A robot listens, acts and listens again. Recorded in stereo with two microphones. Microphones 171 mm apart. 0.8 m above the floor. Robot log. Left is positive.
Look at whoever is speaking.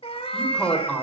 cmd yaw +30
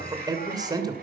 note: So it is at 25° right.
cmd yaw -25
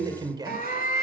note: The man speaking is now 25° right.
cmd yaw -25
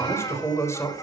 note: The man speaking is now 15° left.
cmd yaw +15
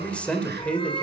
end: Found it: a man speaking, straight ahead.